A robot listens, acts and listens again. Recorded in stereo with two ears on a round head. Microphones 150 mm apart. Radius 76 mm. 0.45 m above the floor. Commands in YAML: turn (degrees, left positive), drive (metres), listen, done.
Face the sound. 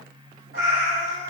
turn: -70
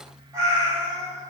turn: -30
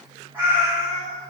turn: -25
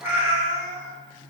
turn: -25
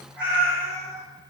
turn: -15
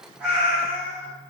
turn: -10
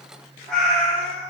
done: "Found it: a cat meowing, straight ahead, 1 to 2 m away."